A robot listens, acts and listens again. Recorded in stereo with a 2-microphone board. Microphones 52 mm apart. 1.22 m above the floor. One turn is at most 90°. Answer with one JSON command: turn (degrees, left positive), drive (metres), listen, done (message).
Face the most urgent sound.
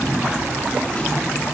{"listen": true}
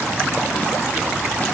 {"listen": true}
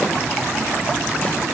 {"done": "I can't make out anything urgent to turn to."}